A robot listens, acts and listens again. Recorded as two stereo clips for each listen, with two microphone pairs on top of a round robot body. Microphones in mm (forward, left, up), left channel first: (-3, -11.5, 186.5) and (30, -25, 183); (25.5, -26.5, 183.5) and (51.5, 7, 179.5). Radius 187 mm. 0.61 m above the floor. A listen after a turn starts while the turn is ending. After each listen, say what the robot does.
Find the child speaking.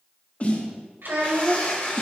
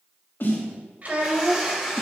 Facing the child speaking, 1 to 2 m away.